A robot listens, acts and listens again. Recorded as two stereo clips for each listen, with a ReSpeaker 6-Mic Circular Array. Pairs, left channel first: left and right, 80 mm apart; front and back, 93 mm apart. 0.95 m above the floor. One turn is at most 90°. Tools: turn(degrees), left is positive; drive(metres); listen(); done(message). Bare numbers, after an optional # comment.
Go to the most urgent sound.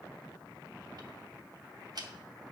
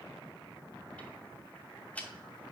listen()
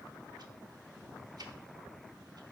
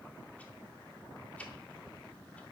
listen()
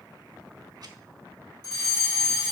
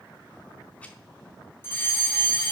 # The fire alarm: 60° left.
turn(60)
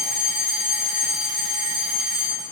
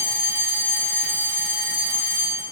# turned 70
# The fire alarm is now 10° right.
turn(-10)
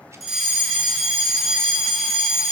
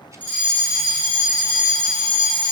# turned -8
drive(1.0)
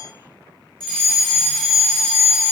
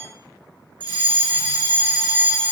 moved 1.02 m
drive(1.0)
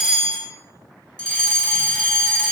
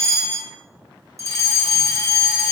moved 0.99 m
# The fire alarm is now 15° left.
turn(15)
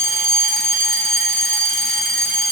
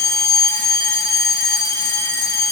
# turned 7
# The fire alarm is now 10° left.
turn(10)
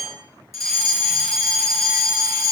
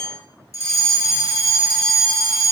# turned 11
drive(1.0)
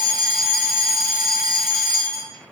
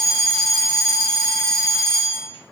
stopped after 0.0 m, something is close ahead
done("I am next to the fire alarm.")